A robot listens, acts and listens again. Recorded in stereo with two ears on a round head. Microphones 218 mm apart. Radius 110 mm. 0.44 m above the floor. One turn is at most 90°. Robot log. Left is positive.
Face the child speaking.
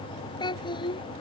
note: The child speaking: about 20° left or 160° left.
cmd yaw +20
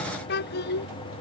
note: So it is at 135° left.
cmd yaw +90
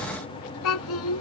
note: The child speaking is now 65° left.
cmd yaw +65
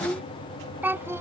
note: The child speaking is now 10° right.
cmd yaw -10
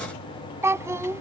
note: The child speaking is now 10° right.
cmd yaw -10
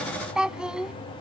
end: Facing the child speaking.